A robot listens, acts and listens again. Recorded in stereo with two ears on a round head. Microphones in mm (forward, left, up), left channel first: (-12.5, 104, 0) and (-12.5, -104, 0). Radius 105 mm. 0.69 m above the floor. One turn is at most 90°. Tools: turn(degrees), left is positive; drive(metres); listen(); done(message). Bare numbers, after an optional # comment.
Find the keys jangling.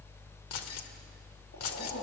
# The keys jangling: about 75° left or 105° left.
turn(75)
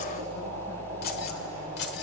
# So it is at 50° left.
turn(50)
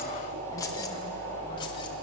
listen()
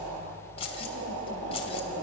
# The keys jangling is now 25° left.
turn(25)
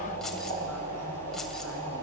listen()
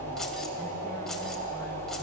listen()
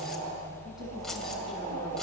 done("Facing where the keys jangling came from. I can't hear it now.")